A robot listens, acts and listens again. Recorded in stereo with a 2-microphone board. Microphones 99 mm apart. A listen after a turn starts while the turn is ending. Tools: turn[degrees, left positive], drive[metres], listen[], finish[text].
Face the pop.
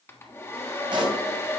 Thought: The pop: about 50° right or 130° right.
Action: turn[-50]
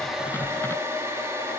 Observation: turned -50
Action: listen[]
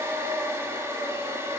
Action: finish[I heard a pop, but can't make it out now. It was about straight ahead or 80° right.]